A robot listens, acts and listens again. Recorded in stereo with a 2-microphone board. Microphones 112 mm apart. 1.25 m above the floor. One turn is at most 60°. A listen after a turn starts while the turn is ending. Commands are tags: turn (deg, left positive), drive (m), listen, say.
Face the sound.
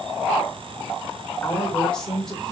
<turn deg="30"/>
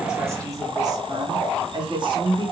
<turn deg="-50"/>
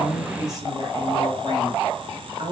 <turn deg="-55"/>
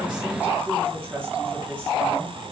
<turn deg="-15"/>
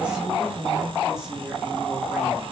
<say>Facing the woman speaking.</say>